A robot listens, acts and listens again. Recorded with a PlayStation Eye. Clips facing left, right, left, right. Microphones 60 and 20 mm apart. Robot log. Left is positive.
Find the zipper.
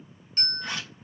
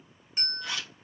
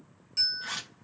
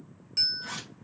note: The zipper: about 40° left or 140° left.
cmd yaw +40
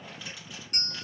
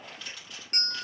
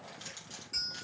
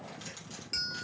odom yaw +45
end: Found it: a zipper, straight ahead, 1 to 2 m away.